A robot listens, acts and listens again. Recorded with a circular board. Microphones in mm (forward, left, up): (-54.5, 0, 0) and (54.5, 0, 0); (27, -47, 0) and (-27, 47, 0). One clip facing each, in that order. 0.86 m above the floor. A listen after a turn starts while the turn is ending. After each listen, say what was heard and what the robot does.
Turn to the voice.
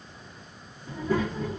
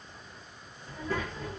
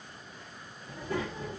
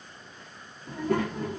The child speaking: 95° left. Turn 95° left.
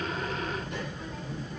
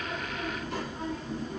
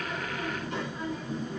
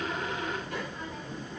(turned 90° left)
Found it: a child speaking, straight ahead, 1 to 2 m away.